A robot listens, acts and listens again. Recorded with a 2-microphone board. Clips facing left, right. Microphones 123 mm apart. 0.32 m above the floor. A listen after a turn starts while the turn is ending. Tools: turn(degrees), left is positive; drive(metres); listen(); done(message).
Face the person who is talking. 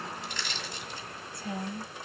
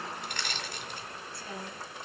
turn(degrees=20)
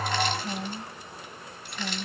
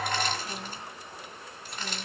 turn(degrees=140)
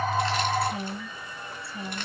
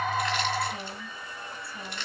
turn(degrees=35)
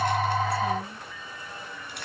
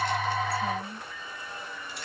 done("Facing the woman speaking, 1 to 2 m away.")